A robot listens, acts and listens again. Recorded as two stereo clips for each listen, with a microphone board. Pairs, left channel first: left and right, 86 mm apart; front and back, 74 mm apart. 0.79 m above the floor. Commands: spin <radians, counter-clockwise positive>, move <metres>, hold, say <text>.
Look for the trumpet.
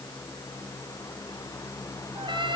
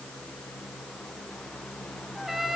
spin -1.66
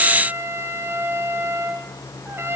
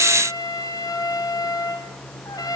spin -0.52
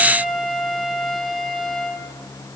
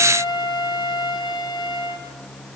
say Facing the trumpet.